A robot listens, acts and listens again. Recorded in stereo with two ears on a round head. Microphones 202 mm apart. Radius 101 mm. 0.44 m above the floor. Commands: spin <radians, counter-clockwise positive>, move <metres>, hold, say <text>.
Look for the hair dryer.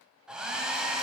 spin -0.52
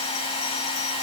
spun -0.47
spin 0.44
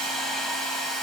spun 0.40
say Facing the hair dryer, under 1 m away.